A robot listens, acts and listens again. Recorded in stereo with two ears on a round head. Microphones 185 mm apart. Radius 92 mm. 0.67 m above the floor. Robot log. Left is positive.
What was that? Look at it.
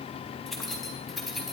cmd yaw +30
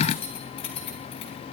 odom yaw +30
note: So it is at 150° left.
cmd yaw +150
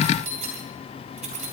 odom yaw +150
note: The keys jangling is now 35° right.
cmd yaw -35
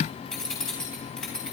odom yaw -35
end: Found it: keys jangling, straight ahead.